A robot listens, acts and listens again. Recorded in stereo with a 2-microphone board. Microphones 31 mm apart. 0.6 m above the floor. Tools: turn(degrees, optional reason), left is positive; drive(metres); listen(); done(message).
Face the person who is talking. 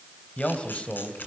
turn(degrees=35, reason="The man speaking: about 35° left or 145° left.")
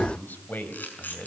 turn(degrees=110, reason="So it is at 110° left.")
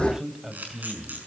turn(degrees=-15, reason="The man speaking is now 15° right.")
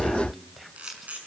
done("Facing the man speaking.")